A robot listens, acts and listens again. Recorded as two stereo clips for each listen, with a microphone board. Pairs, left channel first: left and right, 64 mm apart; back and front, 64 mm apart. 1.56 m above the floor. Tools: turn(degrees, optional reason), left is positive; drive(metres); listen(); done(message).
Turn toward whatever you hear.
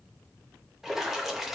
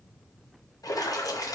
turn(degrees=-175, reason="The splash: 175° right.")
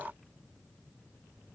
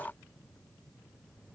done("Facing where the splash came from. I can't hear it now.")